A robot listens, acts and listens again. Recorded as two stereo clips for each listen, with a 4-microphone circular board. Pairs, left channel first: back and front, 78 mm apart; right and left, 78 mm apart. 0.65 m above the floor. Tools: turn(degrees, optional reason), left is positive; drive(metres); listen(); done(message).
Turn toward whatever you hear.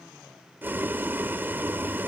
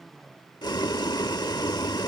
turn(degrees=-65, reason="The boiling: 65° right.")
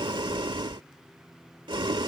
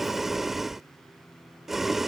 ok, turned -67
done("Facing the boiling.")